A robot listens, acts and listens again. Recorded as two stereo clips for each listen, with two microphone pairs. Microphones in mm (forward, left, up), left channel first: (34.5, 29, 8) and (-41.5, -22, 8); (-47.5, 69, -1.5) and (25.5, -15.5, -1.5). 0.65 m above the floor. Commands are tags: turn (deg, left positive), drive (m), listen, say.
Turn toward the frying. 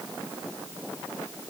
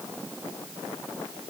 <listen/>
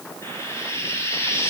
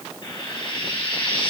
<turn deg="90"/>
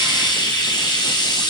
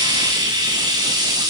<say>Found it: frying, straight ahead, over 4 m away.</say>